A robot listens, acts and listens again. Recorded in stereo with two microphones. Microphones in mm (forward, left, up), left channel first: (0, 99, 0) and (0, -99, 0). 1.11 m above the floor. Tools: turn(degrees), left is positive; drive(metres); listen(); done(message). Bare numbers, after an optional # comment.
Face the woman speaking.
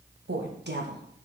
# The woman speaking: about 60° right or 120° right.
turn(-60)
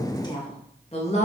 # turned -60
# So it is at 35° left.
turn(35)
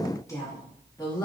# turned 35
# The woman speaking is now 20° left.
turn(20)
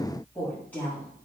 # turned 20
# The woman speaking is now 10° left.
turn(10)
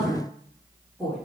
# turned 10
done("Facing the woman speaking.")